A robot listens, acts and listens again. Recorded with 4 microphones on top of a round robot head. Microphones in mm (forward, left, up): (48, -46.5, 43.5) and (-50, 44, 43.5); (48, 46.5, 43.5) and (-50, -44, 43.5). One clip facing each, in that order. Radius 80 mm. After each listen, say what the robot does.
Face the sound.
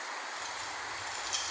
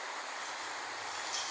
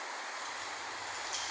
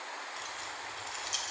Turn 110° right.
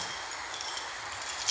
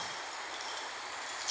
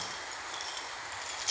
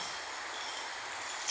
Turn 15° right.
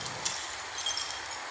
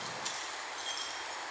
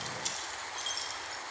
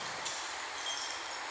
Turn 15° right.
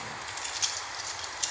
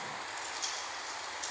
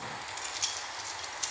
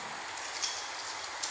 Turn 30° right.
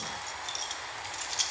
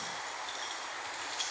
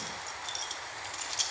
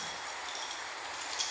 Facing the keys jangling, 1 to 2 m away.